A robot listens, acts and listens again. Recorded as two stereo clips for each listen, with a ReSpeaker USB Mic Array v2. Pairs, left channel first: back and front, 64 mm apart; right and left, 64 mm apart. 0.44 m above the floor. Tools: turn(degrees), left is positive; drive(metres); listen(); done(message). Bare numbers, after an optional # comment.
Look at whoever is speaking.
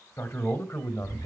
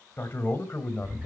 # The man speaking: 150° right.
turn(-150)
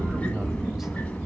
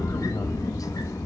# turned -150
listen()
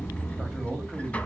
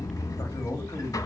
# The man speaking is now 95° right.
turn(-95)
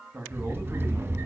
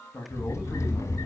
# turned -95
# The man speaking is now 45° right.
turn(-45)
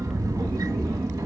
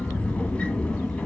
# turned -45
listen()
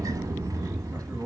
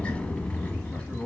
# The man speaking is now 20° right.
turn(-20)
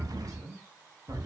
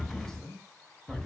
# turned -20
done("Facing the man speaking, 2 to 4 m away.")